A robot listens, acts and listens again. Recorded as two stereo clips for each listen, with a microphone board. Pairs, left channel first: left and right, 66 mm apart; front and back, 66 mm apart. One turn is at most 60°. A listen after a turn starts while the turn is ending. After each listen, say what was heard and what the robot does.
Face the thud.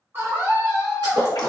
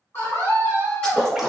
The thud: 80° right. Turn 60° right.
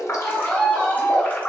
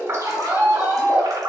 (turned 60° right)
Nothing new. It was at 20° right. Turn 20° right.
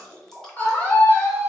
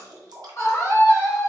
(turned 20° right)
I heard a thud from this way, but can't make it out now.